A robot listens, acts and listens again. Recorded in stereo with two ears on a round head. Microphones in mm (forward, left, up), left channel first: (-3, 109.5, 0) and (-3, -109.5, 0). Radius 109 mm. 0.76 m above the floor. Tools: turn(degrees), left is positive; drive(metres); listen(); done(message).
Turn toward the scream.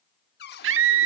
turn(degrees=-55)
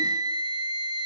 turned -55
turn(degrees=-20)
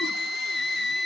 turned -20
done("Facing the scream, 1 to 2 m away.")